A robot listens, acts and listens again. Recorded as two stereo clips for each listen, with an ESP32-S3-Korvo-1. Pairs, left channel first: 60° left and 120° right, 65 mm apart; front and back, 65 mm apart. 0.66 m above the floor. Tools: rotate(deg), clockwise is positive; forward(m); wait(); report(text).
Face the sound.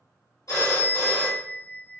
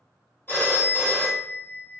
rotate(-50)
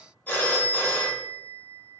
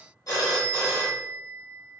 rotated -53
report("Facing the phone ringing, under 1 m away.")